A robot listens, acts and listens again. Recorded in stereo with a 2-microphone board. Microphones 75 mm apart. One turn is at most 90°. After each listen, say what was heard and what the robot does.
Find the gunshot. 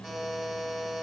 Keep listening.
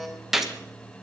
Turn 30° right.
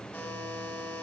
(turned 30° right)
Keep listening.
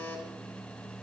I heard a gunshot, but can't make it out now. It was about 25° left or 145° right.